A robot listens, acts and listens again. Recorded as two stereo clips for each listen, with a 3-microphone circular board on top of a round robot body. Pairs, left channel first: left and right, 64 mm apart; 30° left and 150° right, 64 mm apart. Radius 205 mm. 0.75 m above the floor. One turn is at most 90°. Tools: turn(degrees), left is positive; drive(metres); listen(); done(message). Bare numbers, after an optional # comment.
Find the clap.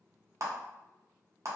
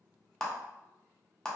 # The clap: 50° right.
turn(-50)
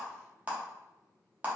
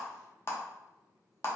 # The clap is now 25° right.
turn(-25)
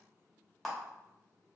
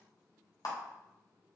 done("Found it: a clap, straight ahead.")